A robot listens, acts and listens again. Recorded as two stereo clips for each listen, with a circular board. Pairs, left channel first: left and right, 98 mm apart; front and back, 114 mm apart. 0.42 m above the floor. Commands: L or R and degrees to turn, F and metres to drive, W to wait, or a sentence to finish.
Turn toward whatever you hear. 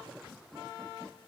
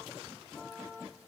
W
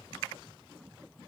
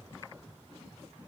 W
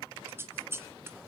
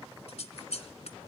R25
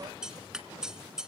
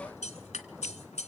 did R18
Facing the scissors.